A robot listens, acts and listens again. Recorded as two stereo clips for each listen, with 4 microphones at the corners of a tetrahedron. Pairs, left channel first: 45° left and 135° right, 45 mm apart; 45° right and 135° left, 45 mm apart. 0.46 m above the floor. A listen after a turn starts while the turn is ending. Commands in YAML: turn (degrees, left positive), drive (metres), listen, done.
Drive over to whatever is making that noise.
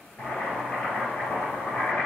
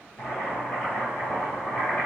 turn: -10
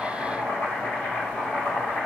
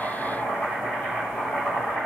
drive: 1.0
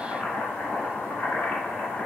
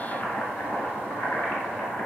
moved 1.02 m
drive: 1.0
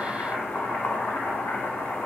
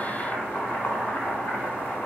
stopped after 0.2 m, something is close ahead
done: "Arrived at the boiling, straight ahead."